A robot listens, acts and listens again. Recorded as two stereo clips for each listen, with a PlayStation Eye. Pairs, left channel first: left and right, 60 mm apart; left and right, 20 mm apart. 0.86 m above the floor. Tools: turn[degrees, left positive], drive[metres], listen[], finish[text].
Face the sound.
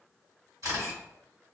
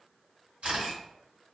Thought: The camera shutter: about 65° right or 115° right.
Action: turn[-65]
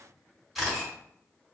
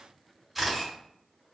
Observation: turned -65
Action: finish[Facing the camera shutter, 1 to 2 m away.]